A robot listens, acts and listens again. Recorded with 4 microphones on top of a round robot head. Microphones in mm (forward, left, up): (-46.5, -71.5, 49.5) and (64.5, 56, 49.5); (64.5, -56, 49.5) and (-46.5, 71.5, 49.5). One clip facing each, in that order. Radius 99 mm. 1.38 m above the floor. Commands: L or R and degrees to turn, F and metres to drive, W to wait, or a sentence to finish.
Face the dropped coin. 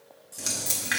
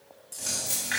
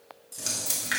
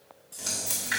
R85
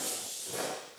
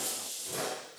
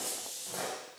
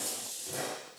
I heard a dropped coin from this way, but can't make it out now.